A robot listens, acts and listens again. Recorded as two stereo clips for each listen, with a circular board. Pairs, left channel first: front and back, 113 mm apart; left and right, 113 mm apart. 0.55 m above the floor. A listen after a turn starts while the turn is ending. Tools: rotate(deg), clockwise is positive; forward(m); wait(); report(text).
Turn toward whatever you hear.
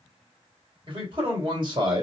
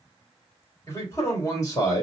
rotate(-145)
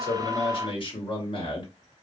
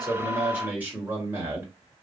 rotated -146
rotate(25)
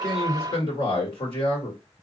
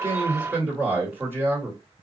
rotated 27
rotate(25)
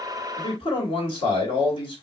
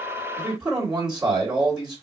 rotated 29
rotate(10)
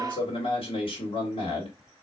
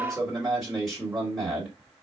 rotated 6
report("Found it: a man speaking, straight ahead.")